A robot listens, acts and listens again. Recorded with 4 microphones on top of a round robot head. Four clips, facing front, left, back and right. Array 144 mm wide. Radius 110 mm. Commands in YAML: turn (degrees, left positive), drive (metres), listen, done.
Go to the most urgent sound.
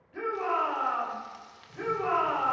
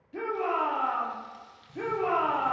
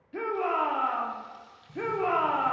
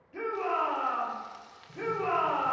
turn: 160
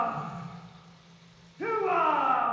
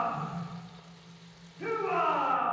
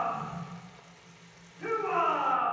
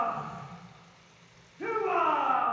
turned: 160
turn: -10
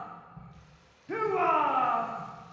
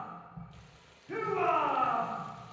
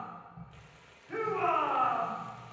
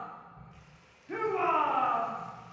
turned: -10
drive: 1.0
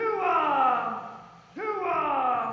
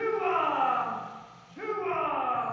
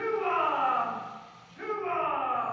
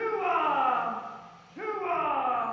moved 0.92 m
drive: 1.0
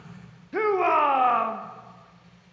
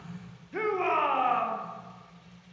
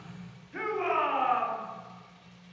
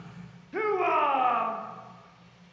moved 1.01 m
drive: 1.0
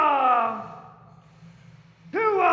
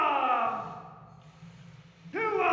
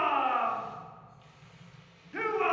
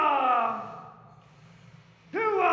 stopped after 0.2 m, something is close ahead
done: "I am next to the shout."